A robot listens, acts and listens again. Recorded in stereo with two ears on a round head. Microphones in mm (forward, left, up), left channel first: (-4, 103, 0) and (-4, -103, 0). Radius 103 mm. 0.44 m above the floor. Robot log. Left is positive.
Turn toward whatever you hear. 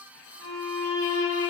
note: The violin: about 25° left or 155° left.
cmd yaw +25
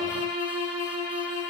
note: So it is at 130° left.
cmd yaw +130
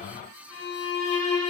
note: The violin is now 10° left.
cmd yaw +10
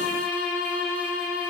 end: Found it: a violin, straight ahead.